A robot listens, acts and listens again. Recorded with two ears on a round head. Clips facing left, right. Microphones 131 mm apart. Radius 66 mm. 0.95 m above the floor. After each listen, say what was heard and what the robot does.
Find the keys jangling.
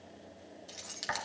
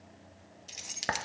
The keys jangling: about 20° right or 160° right. Turn 20° right.
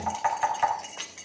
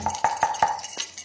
So it is at 135° right. Turn 135° right.
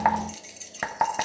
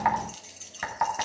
The keys jangling is now 10° left. Turn 10° left.
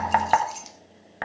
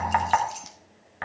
Facing the keys jangling.